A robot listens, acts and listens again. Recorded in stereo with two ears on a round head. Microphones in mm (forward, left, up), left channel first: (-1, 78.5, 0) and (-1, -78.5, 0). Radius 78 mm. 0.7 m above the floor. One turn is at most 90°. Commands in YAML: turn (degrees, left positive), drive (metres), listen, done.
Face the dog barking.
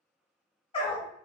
turn: 30
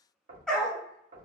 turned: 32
done: "Found it: a dog barking, straight ahead, under 1 m away."